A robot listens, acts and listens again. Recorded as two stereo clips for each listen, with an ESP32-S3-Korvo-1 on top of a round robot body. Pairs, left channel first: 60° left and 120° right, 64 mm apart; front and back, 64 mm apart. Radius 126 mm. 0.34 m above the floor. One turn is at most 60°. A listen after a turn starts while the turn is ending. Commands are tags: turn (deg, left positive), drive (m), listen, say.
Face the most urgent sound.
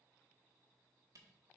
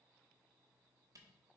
<listen/>
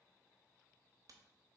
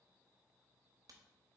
<listen/>
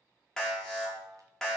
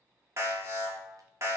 <turn deg="60"/>
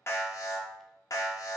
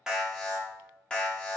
<turn deg="60"/>
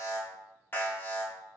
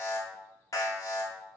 <say>Facing the alarm.</say>